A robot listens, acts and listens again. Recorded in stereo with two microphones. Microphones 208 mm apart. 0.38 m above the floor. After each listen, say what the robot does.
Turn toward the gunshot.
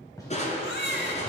Turn 15° left.
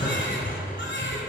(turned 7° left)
Keep listening.
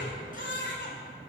I heard a gunshot, but can't make it out now. It was about 10° left or 155° left.